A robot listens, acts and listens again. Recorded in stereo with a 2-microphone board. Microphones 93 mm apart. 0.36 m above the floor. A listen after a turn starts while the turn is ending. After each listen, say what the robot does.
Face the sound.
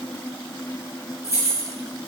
Turn 30° right.
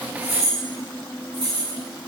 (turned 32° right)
Turn 115° right.
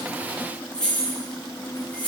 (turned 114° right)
Turn 10° left.
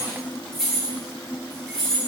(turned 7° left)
Facing the keys jangling, over 4 m away.